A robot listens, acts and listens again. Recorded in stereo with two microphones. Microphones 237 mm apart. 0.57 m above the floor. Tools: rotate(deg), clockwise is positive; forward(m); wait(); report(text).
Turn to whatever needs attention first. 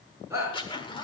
rotate(30)
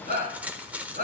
rotate(140)
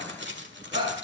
rotate(25)
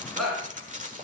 report("Found it: a shout, straight ahead.")